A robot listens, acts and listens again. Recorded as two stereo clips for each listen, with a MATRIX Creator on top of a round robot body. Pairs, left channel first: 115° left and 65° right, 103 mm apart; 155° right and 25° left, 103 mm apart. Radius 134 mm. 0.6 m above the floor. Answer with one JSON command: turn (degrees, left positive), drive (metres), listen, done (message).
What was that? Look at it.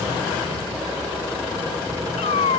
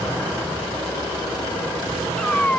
{"turn": 125}
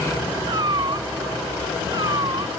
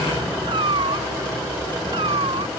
{"turn": -15}
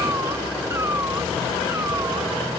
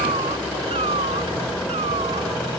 {"listen": true}
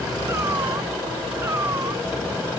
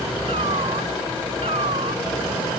{"listen": true}
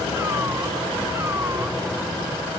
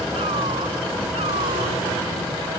{"done": "Facing where the cat meowing came from. I can't hear it now."}